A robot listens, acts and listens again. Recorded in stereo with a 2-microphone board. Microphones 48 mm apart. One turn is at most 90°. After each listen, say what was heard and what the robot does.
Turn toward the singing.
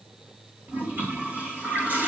Keep listening.
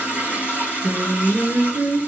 Turn 90° right.
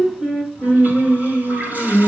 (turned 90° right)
So it is at 10° left. Turn 10° left.
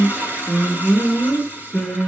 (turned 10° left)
Found it: singing, straight ahead.